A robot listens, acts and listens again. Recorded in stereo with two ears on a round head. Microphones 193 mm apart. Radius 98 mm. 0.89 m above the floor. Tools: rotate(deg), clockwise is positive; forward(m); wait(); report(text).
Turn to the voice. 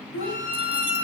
rotate(-65)
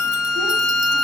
wait()
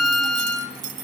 wait()
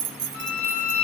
report("I heard a child speaking, but can't make it out now. It was about straight ahead or 50° left.")